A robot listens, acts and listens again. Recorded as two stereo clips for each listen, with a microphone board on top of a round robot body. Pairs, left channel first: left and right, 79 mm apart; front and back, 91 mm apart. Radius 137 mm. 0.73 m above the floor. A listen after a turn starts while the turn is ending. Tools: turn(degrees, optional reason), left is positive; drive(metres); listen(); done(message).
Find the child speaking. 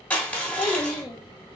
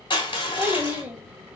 turn(degrees=110, reason="The child speaking: 110° left.")
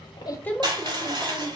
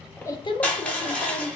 turn(degrees=15, reason="The child speaking is now 15° left.")
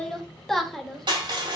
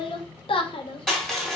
done("Found it: a child speaking, straight ahead.")